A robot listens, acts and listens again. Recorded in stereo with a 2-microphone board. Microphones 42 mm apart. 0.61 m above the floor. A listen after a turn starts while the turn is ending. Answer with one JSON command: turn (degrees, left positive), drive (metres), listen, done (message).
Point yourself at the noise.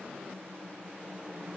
{"listen": true}
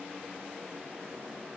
{"listen": true}
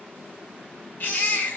{"turn": 55}
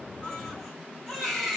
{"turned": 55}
{"done": "Facing the baby crying."}